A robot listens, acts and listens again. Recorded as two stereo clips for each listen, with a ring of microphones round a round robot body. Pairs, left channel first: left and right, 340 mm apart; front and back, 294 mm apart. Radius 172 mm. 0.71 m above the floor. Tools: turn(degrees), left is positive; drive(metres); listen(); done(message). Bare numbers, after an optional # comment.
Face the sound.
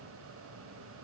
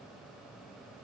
listen()
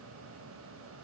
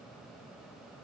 listen()
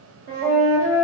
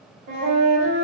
# The flute: 140° right.
turn(-140)
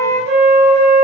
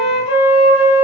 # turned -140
# The flute is now 35° right.
turn(-35)
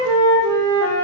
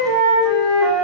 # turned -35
# The flute is now 15° right.
turn(-15)
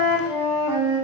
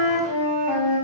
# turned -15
done("Facing the flute.")